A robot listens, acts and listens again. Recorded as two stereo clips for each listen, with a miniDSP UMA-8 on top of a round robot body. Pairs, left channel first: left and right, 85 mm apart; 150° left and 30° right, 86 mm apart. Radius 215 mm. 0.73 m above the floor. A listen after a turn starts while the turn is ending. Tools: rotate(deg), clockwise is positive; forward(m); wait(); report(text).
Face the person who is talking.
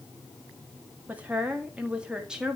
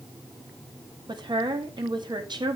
rotate(10)
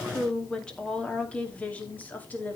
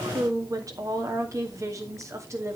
rotate(-25)
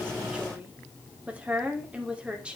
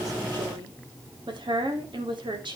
rotate(15)
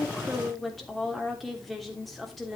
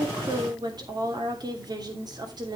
report("Found it: a woman speaking, straight ahead, 2 to 4 m away.")